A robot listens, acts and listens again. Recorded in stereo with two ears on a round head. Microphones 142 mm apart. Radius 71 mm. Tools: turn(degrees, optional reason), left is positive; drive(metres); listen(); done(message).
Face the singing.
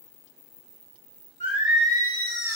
turn(degrees=50, reason="The singing: about 50° left or 130° left.")
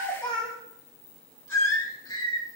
turn(degrees=25, reason="So it is at 25° left.")
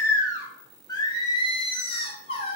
turn(degrees=35, reason="The singing is now 35° left.")
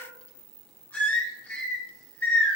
turn(degrees=10, reason="The singing is now 10° left.")
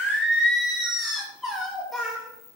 done("Facing the singing, 1 to 2 m away.")